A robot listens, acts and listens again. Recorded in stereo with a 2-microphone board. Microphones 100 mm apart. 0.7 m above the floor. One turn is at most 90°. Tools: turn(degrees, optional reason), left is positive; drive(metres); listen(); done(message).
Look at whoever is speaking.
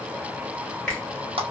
listen()
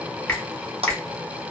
listen()
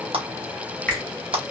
done("I can't make out anyone speaking to turn to.")